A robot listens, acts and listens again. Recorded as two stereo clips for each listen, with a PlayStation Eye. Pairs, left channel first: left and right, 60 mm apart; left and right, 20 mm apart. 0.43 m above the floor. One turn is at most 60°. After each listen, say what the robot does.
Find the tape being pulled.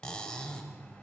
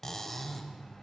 Keep listening.
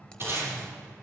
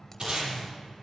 Turn 45° right.
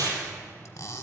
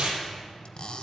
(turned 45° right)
Turn 60° right.
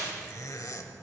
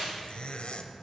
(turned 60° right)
Turn 35° right.
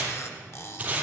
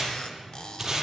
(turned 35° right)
Turn 25° right.
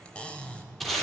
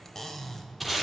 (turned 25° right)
Facing the tape being pulled.